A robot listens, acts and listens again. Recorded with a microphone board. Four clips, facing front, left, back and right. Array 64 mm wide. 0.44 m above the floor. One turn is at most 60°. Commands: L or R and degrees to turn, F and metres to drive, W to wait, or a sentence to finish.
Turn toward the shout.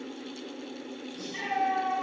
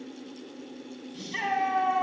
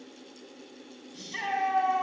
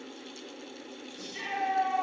L60
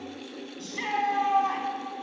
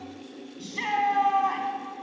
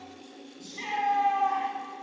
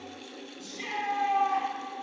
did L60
L60
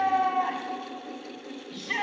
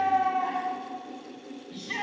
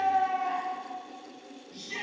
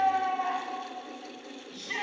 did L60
Found it: a shout, straight ahead, 2 to 4 m away.